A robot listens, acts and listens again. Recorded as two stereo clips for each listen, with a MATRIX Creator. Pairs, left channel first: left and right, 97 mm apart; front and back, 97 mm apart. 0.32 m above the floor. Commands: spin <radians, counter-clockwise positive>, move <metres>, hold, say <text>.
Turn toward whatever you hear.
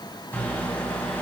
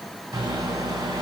spin 2.71
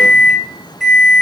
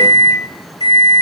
say Found it: a microwave, straight ahead, 2 to 4 m away.